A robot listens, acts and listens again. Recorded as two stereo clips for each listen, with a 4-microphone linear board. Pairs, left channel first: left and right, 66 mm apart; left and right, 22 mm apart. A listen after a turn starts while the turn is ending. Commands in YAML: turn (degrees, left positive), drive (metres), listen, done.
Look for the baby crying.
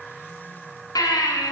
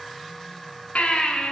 turn: 90
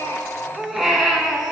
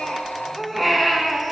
done: "Found it: a baby crying, straight ahead."